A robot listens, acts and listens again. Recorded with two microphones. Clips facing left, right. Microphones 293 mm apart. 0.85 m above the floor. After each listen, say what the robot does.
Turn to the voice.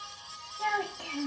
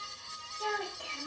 Turn 90° left.
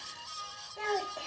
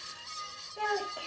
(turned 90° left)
Turn 15° right.
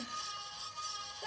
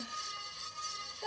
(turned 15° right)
Facing the child speaking.